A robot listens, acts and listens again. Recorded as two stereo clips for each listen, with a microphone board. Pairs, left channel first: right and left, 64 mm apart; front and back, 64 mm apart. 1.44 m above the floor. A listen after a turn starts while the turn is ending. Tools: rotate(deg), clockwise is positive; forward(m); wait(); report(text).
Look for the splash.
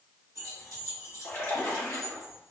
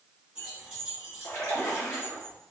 rotate(35)
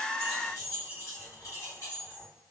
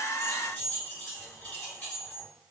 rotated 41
report("Facing where the splash came from. I can't hear it now.")